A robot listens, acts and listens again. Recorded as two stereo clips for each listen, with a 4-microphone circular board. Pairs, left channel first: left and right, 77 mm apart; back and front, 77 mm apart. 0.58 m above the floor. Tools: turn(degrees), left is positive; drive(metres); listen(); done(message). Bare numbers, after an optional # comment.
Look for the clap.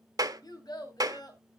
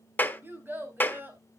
# The clap: 115° right.
turn(-115)
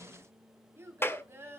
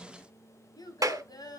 # The clap is now 35° left.
turn(35)
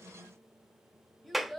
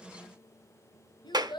done("Facing the clap.")